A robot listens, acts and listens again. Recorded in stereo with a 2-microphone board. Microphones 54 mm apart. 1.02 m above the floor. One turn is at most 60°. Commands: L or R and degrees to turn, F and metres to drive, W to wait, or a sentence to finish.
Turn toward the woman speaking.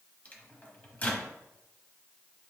W
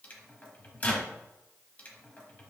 W
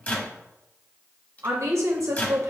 R60
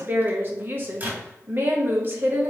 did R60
R45
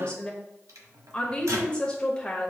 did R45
L20
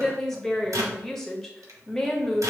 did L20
Facing the woman speaking.